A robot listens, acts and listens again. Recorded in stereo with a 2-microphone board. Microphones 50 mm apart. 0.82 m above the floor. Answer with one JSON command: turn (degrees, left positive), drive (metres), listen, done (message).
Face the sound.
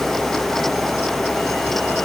{"listen": true}
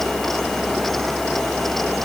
{"listen": true}
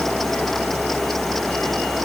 {"done": "I can't make out anything."}